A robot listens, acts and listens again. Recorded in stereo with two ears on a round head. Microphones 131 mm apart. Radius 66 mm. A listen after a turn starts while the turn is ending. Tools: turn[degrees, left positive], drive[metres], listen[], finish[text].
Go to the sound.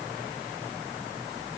Action: listen[]
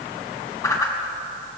Thought: The whoosh: about 25° left or 155° left.
Action: turn[25]
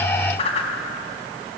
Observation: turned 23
Thought: So it is at 130° left.
Action: turn[130]
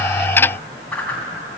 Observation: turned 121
Thought: The whoosh is now 10° left.
Action: turn[10]
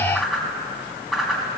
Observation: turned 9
Action: drive[1.0]
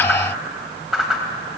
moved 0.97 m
Action: drive[1.0]
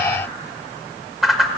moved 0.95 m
Action: drive[1.0]
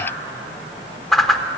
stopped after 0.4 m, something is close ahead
Action: finish[I am next to the whoosh.]